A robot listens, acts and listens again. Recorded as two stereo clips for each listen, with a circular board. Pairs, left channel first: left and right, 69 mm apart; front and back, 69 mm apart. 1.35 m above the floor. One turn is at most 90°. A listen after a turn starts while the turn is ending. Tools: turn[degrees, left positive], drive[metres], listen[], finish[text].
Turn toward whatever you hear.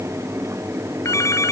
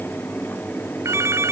Thought: The phone ringing: 135° left.
Action: turn[90]
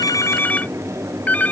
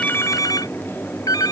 Thought: The phone ringing is now 25° left.
Action: turn[25]
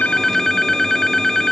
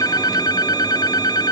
Action: finish[Facing the phone ringing.]